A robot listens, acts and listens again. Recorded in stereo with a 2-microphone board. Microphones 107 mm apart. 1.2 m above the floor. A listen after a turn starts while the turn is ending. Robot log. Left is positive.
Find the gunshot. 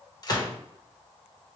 note: The gunshot: about 40° left or 140° left.
cmd yaw +40
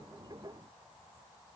cmd idle
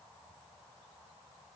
end: I heard a gunshot, but can't make it out now. It was about straight ahead or 100° left.